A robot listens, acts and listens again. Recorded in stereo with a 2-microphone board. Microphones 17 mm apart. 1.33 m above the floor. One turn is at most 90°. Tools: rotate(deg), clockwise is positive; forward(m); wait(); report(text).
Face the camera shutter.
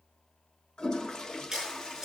rotate(25)
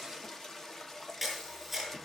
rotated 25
report("Found it: a camera shutter, straight ahead.")